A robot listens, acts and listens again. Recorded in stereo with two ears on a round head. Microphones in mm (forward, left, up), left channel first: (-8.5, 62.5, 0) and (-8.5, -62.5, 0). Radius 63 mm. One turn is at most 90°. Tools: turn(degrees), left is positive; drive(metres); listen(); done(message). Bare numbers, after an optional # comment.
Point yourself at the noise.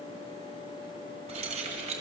# The keys jangling: about 55° right or 125° right.
turn(-55)
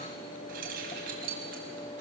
# So it is at 65° right.
turn(-65)
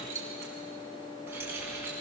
# The keys jangling is now 15° right.
turn(-15)
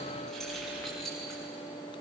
done("Facing the keys jangling, over 4 m away.")